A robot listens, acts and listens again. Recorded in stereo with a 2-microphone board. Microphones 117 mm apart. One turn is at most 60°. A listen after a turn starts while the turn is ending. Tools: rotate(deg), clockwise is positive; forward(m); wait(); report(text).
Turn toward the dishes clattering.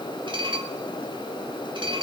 rotate(45)
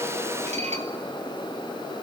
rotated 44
rotate(60)
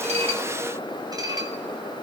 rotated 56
rotate(35)
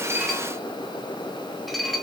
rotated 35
report("Found it: dishes clattering, straight ahead, 2 to 4 m away.")